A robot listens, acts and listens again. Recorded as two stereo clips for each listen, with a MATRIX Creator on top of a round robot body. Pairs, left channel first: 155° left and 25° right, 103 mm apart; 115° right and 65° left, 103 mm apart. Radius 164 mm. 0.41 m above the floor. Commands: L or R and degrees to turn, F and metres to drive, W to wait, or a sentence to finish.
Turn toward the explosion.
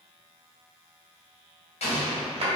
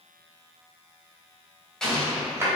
L165
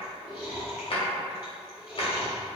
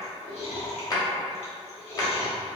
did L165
Facing where the explosion came from. I can't hear it now.